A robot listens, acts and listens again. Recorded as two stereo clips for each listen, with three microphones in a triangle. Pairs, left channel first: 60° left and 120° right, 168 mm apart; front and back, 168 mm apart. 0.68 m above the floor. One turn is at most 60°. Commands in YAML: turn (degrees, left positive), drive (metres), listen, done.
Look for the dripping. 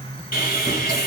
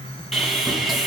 listen: true
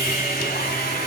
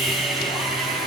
listen: true
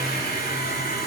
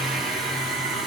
done: "I can't make out dripping to turn to."